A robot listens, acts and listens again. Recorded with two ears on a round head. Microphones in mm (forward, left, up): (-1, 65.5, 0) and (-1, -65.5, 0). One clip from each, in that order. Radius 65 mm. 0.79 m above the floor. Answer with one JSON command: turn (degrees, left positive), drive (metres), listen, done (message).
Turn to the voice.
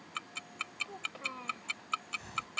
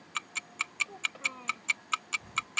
{"turn": 30}
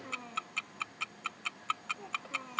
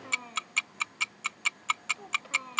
{"turn": -20}
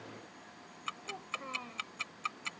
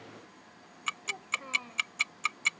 {"done": "Found it: a child speaking, straight ahead."}